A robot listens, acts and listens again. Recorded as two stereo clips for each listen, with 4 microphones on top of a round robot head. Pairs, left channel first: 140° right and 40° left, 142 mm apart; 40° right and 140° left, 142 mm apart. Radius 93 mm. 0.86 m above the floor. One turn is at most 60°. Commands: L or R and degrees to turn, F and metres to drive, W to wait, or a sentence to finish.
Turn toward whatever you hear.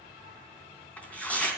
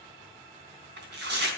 L60
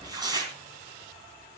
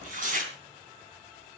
L60
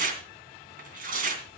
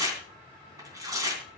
L60
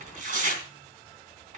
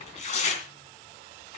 Facing the tearing paper, 2 to 4 m away.